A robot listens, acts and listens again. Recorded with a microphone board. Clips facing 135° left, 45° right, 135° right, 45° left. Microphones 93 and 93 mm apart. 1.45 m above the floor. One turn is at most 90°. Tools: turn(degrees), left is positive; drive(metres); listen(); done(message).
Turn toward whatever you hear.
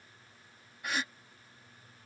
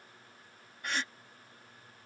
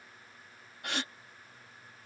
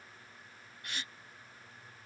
turn(degrees=-90)
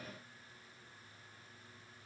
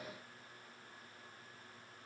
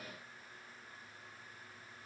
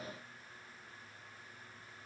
turn(degrees=-50)
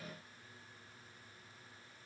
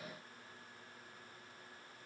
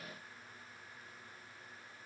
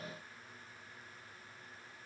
done("I heard a gasp from this way, but can't make it out now.")